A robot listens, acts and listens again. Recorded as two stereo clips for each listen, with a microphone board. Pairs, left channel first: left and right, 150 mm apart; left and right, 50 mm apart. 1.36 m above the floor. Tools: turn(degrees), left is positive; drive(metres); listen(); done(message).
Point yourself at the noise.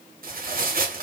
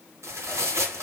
turn(degrees=-70)
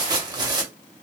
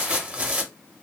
turn(degrees=-30)
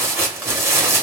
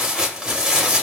turn(degrees=-15)
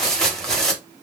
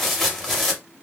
done("Facing the tearing paper, under 1 m away.")